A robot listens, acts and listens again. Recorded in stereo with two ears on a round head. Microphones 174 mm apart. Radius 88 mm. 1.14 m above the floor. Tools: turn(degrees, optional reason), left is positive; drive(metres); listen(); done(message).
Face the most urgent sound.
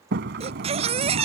turn(degrees=-30, reason="The baby crying: about 30° right or 150° right.")
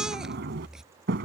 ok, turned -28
done("Found it: a baby crying, straight ahead.")